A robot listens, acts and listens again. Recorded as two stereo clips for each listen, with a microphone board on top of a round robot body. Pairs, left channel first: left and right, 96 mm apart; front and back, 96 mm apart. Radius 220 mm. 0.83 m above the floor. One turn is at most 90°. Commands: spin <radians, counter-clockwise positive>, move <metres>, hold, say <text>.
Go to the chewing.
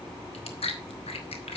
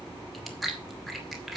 spin 1.57
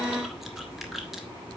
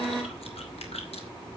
move 1.0
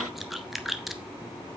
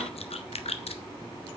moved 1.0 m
move 1.0
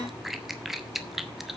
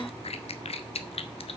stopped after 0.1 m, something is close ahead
say I am next to the chewing.